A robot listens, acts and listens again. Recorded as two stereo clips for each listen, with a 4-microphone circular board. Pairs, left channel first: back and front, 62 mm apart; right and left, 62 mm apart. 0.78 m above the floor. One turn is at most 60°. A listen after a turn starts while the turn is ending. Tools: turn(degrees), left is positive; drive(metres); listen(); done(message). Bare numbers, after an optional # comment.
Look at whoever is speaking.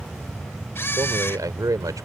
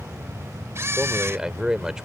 # The man speaking: 10° left.
turn(10)
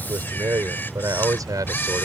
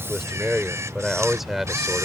done("Found it: a man speaking, straight ahead.")